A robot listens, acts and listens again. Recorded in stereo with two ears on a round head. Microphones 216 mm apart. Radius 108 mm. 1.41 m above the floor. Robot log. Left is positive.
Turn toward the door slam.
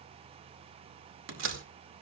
note: The door slam: about 55° right or 125° right.
cmd yaw -55
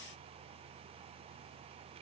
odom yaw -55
cmd idle
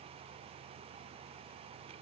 end: I heard a door slam, but can't make it out now. It was about straight ahead or 70° right.